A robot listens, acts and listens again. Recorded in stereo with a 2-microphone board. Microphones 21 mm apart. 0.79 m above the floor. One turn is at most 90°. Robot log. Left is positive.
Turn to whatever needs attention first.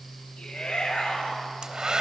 note: The shout: about 70° left or 110° left.
cmd yaw +70
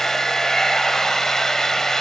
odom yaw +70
cmd idle
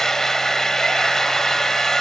cmd idle
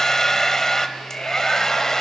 note: So it is at 40° left.
cmd yaw +40
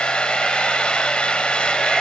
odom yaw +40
cmd idle
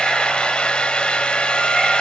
cmd idle
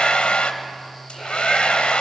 end: Facing where the shout came from. I can't hear it now.